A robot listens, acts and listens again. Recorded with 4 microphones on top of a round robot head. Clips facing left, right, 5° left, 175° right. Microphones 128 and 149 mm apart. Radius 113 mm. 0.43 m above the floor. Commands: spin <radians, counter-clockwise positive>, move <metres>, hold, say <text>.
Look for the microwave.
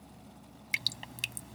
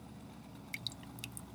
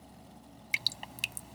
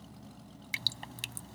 hold
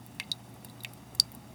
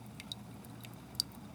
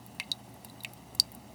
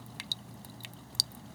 hold
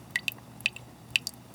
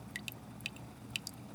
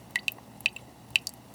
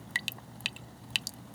say I can't make out a microwave, only dripping.